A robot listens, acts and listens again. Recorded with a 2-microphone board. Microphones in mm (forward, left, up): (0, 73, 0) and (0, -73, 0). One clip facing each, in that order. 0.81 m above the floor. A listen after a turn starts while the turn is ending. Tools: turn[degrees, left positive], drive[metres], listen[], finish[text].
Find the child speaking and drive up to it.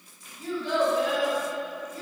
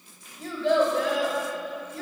Action: turn[-90]
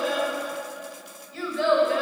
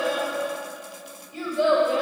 Thought: So it is at 15° right.
Action: turn[-15]
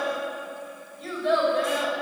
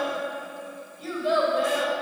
Action: drive[1.0]
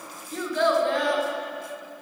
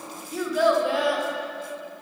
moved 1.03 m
Action: drive[1.0]
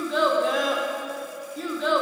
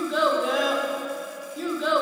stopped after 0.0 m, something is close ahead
Action: finish[Arrived at the child speaking, straight ahead.]